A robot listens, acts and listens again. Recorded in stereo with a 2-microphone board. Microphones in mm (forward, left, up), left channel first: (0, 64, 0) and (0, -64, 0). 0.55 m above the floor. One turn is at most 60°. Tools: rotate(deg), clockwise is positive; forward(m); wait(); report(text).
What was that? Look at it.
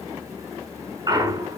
rotate(30)
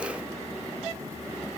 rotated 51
wait()
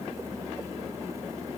report("I heard a clunk, but can't make it out now. It was about 20° left or 100° right.")